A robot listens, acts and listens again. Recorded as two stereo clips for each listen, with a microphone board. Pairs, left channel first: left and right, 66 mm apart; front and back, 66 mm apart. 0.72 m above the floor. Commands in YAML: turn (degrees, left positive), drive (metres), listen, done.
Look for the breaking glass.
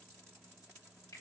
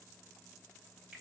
listen: true
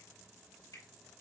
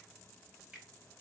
listen: true
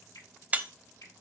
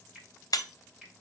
turn: -25
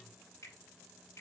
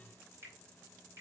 done: "I heard breaking glass from this way, but can't make it out now."